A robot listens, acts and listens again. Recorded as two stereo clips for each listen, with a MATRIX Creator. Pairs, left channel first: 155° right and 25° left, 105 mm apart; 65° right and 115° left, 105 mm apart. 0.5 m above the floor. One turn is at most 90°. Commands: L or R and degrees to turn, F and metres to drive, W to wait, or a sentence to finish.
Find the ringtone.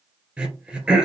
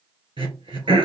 W
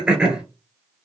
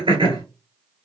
W
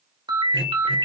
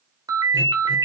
L60
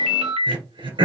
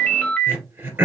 L10
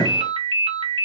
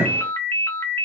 Facing the ringtone, under 1 m away.